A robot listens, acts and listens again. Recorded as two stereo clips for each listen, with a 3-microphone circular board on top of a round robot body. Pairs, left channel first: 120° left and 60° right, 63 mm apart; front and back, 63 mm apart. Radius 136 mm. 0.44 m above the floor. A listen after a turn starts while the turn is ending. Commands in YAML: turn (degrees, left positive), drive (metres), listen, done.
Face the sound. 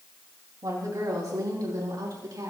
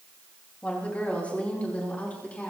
turn: -65
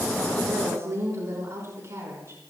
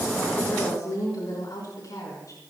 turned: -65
turn: -20
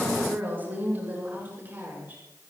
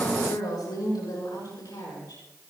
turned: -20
done: "Facing the woman speaking."